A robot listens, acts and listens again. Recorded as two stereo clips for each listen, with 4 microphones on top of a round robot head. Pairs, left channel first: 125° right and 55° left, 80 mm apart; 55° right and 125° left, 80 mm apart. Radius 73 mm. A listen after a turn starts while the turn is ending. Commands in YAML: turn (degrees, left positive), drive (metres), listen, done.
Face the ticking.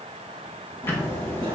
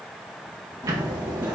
turn: 170
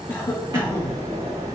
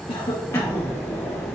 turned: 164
done: "Found it: ticking, straight ahead."